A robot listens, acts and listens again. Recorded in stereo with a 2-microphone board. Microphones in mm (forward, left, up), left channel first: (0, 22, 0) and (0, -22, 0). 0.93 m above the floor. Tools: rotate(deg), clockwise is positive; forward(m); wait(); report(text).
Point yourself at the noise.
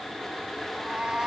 rotate(25)
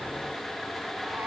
wait()
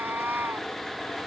rotate(115)
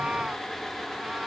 rotate(25)
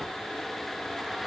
wait()
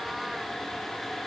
wait()
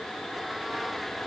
report("Facing where the cat meowing came from. I can't hear it now.")